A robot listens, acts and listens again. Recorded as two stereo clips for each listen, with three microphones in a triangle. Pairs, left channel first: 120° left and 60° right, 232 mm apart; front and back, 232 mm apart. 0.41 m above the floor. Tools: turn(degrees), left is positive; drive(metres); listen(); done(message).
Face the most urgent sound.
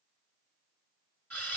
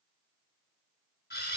listen()
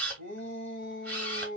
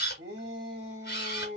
turn(degrees=150)
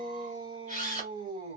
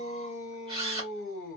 done("Facing the shout.")